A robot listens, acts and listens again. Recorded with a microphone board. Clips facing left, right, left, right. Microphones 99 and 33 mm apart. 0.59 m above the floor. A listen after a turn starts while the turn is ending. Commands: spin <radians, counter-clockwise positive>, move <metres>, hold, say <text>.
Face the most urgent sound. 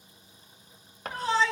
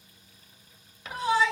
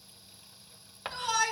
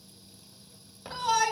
spin -0.52
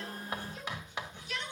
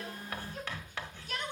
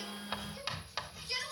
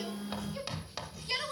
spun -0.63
spin -2.36
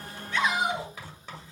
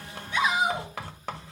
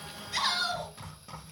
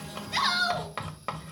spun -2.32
say Found it: a shout, straight ahead, over 4 m away.